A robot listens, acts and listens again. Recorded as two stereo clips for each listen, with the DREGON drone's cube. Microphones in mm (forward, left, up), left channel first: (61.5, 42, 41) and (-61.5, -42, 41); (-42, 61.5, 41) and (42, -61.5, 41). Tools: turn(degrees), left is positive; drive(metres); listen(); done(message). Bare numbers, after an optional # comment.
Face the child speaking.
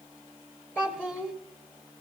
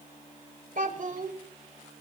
# The child speaking: 40° right.
turn(-40)
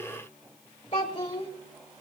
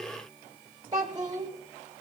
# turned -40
done("Found it: a child speaking, straight ahead.")